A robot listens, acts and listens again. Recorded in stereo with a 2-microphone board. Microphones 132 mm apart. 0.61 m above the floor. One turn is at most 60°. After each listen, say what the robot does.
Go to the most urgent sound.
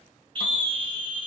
Turn 35° right.
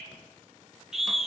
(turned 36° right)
Drive 1.0 m forward.
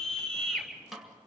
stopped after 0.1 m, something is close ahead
Blocked. The scream is further on, straight ahead.